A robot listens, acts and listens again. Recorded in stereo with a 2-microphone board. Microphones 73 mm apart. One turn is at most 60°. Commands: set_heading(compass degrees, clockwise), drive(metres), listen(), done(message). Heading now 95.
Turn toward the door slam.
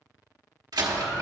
set_heading(155)
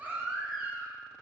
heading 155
listen()
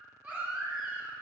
done("I heard a door slam, but can't make it out now. It was about 5° right or 55° right.")